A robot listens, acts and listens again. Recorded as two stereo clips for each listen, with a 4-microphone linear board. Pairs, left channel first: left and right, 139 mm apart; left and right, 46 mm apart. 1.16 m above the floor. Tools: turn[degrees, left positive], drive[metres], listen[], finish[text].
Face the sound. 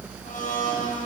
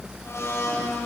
Thought: The blender: about 70° left or 110° left.
Action: turn[70]
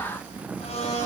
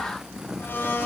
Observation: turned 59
Thought: So it is at 50° left.
Action: turn[50]
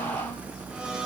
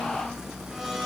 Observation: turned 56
Thought: Nothing new. It was at 10° right.
Action: turn[-10]
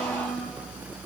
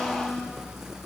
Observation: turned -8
Action: listen[]
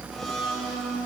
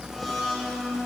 Action: finish[Facing the blender, over 4 m away.]